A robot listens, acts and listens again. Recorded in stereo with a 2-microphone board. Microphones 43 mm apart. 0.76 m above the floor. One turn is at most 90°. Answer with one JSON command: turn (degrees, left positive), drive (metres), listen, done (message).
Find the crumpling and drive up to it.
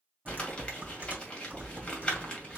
{"turn": 25}
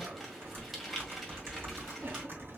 {"drive": 1.0}
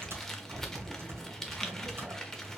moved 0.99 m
{"turn": 10}
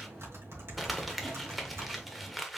{"drive": 1.0}
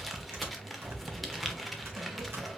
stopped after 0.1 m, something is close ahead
{"done": "Arrived at the crumpling, straight ahead."}